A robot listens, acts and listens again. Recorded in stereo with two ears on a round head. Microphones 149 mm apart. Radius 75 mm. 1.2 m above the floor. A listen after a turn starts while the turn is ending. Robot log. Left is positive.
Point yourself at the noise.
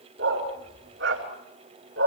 cmd yaw -90
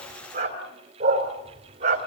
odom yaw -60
note: So it is at 40° right.
cmd yaw -40
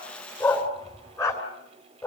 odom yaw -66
note: The dog barking is now 15° left.
cmd yaw +15
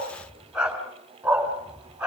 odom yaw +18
end: Facing the dog barking, 2 to 4 m away.